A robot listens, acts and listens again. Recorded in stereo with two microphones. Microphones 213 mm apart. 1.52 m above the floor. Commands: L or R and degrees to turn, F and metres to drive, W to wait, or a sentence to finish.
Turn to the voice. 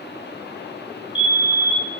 W
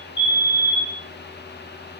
W
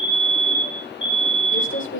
L70
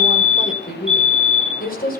L45
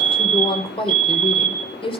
L25
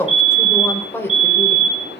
L10
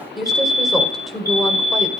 Found it: a woman speaking, straight ahead, over 4 m away.